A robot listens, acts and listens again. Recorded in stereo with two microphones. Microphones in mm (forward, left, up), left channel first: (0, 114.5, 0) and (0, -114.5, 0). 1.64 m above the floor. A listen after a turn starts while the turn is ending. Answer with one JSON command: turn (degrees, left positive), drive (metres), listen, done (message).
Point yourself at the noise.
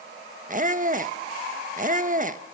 {"turn": -35}
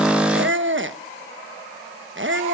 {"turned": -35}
{"turn": -100}
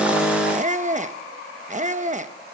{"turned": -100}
{"turn": -40}
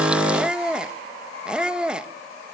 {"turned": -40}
{"done": "Facing the squeak."}